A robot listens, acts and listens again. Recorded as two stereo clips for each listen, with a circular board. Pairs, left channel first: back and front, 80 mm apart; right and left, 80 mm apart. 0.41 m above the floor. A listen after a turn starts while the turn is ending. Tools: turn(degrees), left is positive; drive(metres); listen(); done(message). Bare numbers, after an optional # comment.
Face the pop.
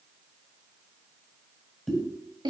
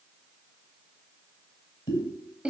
# The pop: 90° right.
turn(-90)
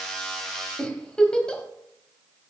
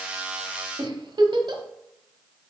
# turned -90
done("I heard a pop from this way, but can't make it out now.")